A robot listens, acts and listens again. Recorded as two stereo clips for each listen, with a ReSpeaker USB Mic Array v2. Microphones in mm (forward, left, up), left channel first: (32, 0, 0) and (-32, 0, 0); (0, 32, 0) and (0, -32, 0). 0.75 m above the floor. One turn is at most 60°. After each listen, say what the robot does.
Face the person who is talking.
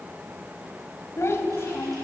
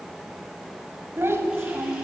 Turn 45° right.
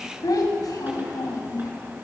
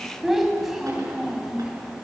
Turn 10° right.
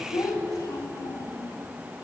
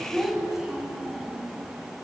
Turn 10° right.
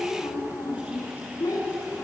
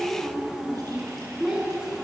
Turn 10° right.
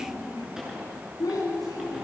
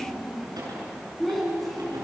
Facing the child speaking, over 4 m away.